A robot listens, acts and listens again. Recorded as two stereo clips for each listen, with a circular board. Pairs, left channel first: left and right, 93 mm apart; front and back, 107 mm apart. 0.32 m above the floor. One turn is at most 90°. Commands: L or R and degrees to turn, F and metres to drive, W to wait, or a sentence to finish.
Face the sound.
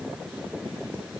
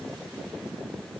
W
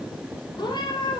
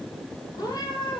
L50
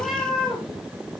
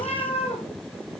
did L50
Found it: a cat meowing, straight ahead.